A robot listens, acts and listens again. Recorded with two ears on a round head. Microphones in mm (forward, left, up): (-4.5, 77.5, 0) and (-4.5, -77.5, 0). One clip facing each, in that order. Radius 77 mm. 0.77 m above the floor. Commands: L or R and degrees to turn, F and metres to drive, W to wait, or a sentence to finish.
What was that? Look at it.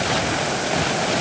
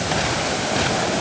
W
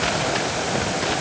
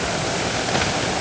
W
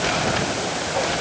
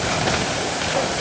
I can't make out anything to turn to.